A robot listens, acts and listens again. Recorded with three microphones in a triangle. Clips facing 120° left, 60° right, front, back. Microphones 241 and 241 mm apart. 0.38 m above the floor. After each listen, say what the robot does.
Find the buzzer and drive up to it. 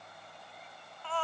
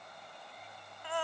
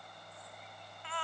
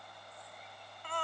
Keep listening.
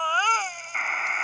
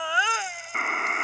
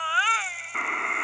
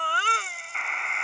Turn 30° right.
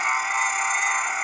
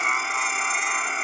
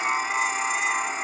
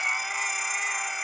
Turn 15° right.
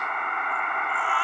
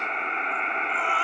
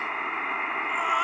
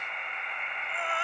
Drive 1.0 m forward.
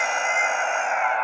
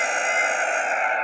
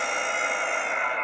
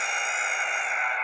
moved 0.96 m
Drive 1.0 m forward.
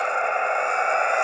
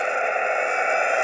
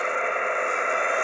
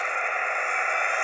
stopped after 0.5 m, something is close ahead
I am next to the buzzer.